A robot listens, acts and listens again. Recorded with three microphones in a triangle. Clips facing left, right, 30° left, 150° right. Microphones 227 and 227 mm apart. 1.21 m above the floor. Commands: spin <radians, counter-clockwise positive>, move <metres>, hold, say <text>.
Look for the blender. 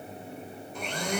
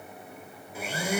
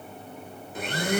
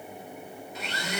spin -0.17
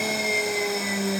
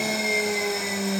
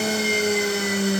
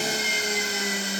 say Facing the blender.